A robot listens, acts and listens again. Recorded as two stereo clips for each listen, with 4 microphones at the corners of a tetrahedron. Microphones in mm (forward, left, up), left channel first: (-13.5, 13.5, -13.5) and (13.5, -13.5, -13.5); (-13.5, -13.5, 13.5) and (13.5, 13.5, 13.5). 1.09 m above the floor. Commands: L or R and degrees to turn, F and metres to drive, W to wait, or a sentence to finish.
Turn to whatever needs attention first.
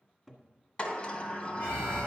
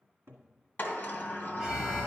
L125
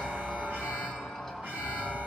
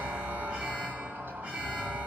R20
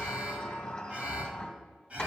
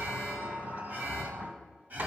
Found it: an alarm, straight ahead.